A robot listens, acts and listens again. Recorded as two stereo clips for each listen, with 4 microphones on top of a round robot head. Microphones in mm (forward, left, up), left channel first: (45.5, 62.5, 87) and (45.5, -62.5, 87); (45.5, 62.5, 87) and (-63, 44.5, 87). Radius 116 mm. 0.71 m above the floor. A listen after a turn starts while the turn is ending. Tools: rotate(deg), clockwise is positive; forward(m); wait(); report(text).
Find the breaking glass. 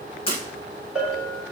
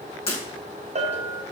rotate(-45)
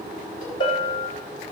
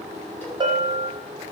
report("Facing where the breaking glass came from. I can't hear it now.")